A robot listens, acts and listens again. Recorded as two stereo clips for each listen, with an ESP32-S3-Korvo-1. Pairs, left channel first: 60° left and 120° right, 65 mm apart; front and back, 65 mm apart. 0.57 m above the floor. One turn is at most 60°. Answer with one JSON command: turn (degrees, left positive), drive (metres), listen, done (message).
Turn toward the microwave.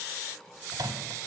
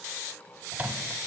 {"turn": -60}
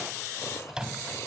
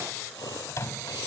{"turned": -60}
{"turn": -40}
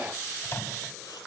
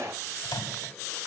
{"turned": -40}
{"turn": 10}
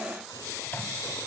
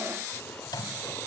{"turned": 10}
{"done": "Facing the microwave."}